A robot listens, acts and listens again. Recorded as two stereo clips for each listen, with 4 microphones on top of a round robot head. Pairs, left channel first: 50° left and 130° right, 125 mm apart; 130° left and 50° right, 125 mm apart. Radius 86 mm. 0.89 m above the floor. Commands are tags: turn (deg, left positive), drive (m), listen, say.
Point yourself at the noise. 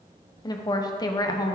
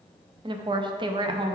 <say>Facing the woman speaking.</say>